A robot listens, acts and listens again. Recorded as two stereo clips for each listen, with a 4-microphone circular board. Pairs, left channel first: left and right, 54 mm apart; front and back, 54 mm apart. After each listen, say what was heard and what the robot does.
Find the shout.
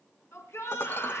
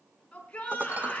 The shout: 65° left. Turn 65° left.
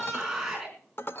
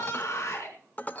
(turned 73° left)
Found it: a shout, straight ahead, over 4 m away.